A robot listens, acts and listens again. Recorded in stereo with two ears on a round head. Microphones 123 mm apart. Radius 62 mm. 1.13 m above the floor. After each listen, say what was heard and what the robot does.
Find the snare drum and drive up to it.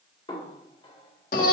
The snare drum: about 35° left or 145° left. Turn 35° left.
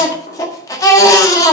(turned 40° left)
Keep listening.
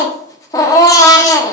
Keep listening.
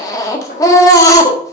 So it is at 105° left. Turn 105° left.
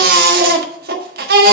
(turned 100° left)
Keep listening.
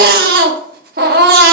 Keep listening.
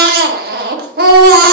Facing where the snare drum came from. I can't hear it now. I did not reach it.